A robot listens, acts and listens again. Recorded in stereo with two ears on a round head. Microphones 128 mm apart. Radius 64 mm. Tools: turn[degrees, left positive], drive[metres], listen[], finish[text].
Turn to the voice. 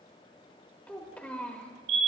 Action: turn[30]
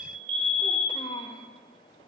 Thought: So it is at 135° left.
Action: turn[135]
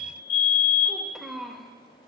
Action: finish[Found it: a child speaking, straight ahead.]